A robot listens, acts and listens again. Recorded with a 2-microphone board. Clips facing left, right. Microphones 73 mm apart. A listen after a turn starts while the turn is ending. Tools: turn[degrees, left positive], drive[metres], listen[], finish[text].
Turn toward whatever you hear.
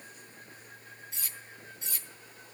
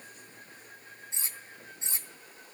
Thought: The cutlery clinking: about 25° right or 155° right.
Action: turn[-25]
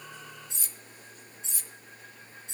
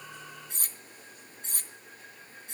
Thought: So it is at 125° right.
Action: turn[-125]
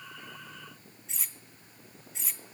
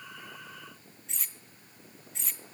Action: finish[Found it: cutlery clinking, straight ahead.]